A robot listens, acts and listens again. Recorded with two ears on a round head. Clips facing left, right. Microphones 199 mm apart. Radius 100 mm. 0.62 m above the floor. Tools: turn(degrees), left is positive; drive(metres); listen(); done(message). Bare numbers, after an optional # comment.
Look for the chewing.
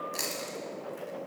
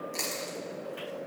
turn(30)
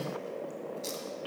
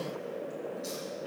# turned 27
# So it is at 145° left.
turn(145)
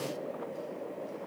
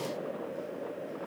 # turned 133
# Nothing new. It was at 10° left.
turn(10)
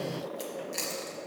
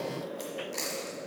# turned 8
done("Facing the chewing.")